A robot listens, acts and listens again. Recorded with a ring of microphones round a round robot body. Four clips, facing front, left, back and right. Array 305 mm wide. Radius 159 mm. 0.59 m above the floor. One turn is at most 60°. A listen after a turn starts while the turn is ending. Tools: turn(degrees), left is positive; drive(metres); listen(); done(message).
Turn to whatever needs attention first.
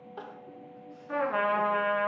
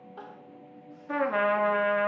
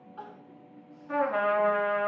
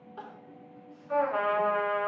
done("Facing the crying.")